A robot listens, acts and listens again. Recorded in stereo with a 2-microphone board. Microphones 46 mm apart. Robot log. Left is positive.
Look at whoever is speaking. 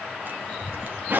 cmd yaw +30
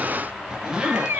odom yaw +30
note: So it is at 145° left.
cmd yaw +145
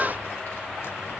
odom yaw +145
note: The child speaking is now 60° left.
cmd yaw +60
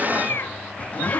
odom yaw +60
cmd idle
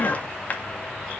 note: The child speaking is now 15° right.
cmd yaw -15
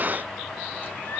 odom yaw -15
cmd idle
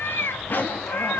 end: Facing the child speaking, 2 to 4 m away.